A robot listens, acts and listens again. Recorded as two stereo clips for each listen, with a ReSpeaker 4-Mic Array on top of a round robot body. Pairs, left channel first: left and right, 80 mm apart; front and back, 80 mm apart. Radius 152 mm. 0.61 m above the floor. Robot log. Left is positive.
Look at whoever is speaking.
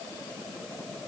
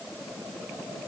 cmd idle
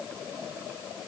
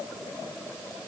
cmd idle
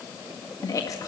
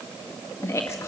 note: The woman speaking: 50° left.
cmd yaw +50
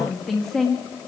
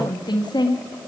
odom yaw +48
end: Found it: a woman speaking, straight ahead, 2 to 4 m away.